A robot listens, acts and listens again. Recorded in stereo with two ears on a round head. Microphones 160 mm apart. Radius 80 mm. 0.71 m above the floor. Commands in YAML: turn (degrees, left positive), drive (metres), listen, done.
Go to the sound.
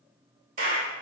turn: -45
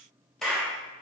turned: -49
drive: 1.0
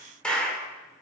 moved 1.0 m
drive: 1.0
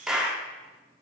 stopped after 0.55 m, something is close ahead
done: "I am next to the clap."